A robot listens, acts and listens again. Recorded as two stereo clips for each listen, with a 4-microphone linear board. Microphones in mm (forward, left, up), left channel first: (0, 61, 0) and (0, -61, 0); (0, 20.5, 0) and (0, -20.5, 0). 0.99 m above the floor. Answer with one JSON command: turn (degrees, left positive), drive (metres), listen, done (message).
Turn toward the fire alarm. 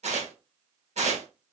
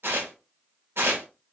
{"listen": true}
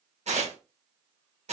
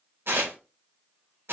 {"listen": true}
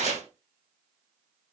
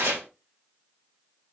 {"done": "I can't make out a fire alarm to turn to."}